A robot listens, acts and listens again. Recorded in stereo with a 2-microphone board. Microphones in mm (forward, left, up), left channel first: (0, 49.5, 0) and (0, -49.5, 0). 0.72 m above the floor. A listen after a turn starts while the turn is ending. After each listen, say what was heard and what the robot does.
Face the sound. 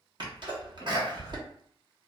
The sneeze: about 50° right or 130° right. Turn 50° right.
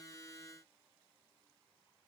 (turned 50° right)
Keep listening.
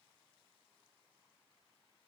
I heard a sneeze, but can't make it out now. It was about straight ahead or 80° right.